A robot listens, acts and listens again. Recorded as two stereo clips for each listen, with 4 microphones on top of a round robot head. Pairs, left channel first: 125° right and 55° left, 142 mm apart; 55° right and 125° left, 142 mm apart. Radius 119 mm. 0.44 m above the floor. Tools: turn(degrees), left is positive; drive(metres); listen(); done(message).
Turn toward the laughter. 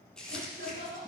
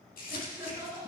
turn(degrees=50)
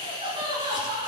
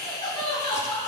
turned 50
done("Facing the laughter.")